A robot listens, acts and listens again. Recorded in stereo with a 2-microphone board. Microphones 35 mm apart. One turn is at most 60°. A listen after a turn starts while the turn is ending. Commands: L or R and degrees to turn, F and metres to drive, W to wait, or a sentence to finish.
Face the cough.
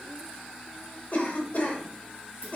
L50
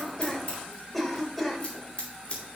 Facing the cough, 1 to 2 m away.